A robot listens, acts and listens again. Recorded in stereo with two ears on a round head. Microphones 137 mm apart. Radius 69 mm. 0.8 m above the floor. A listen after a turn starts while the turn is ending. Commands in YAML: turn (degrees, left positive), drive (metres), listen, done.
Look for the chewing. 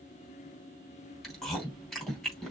turn: 30
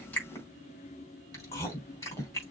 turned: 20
turn: 160
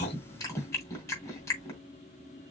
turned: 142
turn: 20
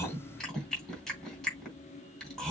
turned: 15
done: "Found it: chewing, straight ahead."